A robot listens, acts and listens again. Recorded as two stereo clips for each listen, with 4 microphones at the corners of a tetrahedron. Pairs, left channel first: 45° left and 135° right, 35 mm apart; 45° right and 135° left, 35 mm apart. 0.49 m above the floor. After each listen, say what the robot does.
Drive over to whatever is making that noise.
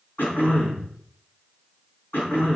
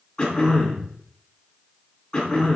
Turn 20° left.
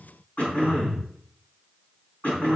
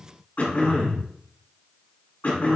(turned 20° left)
Drive 1.0 m forward.
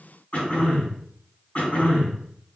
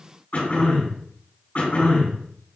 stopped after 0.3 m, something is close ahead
Something is in my way. I am facing the throat clearing but have not reached it.